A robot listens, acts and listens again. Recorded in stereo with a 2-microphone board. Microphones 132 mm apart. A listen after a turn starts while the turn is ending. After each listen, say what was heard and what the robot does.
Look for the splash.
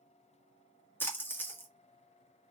The splash: about 15° left or 165° left. Turn 15° left.
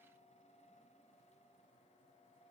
Keep listening.
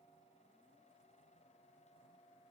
I heard a splash, but can't make it out now. It was about straight ahead or 150° left.